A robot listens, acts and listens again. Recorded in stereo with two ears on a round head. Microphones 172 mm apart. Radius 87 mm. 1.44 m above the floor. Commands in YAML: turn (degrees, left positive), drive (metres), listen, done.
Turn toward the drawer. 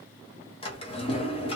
turn: 30
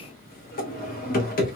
turn: 115
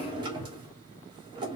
turn: -30
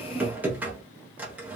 turn: -10
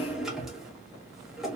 done: "Found it: a drawer, straight ahead."